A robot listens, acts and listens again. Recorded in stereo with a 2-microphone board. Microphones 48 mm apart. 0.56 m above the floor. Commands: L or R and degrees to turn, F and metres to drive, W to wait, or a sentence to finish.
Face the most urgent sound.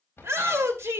R65
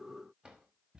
W
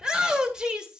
R15
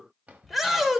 Facing the shout.